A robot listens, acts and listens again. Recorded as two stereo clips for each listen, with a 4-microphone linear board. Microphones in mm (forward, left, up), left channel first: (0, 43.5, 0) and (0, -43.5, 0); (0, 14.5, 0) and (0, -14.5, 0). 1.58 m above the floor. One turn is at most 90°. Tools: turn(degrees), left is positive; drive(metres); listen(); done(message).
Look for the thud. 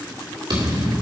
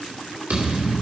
turn(degrees=-60)
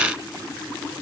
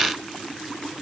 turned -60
listen()
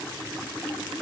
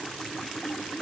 done("I heard a thud, but can't make it out now. It was about straight ahead or 60° right.")